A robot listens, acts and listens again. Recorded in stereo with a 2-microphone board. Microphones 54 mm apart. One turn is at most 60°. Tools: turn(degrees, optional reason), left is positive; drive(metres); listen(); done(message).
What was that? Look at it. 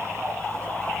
listen()
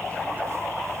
listen()
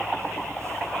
done("I can't make out anything.")